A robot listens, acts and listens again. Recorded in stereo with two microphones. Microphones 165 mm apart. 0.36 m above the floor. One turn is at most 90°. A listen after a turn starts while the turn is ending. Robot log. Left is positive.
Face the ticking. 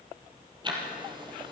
note: The ticking: about 30° right or 150° right.
cmd yaw -30
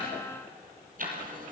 note: So it is at 120° right.
cmd yaw -90
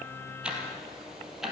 end: Facing the ticking.